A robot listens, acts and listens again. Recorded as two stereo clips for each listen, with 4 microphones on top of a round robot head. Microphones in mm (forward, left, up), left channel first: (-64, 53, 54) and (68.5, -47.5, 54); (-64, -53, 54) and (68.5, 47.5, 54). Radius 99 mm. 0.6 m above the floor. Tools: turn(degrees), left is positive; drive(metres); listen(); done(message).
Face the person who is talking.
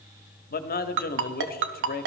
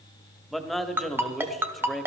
turn(degrees=125)
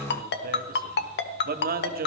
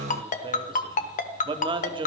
turn(degrees=-20)
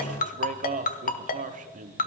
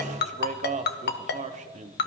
done("Found it: a man speaking, straight ahead, 1 to 2 m away.")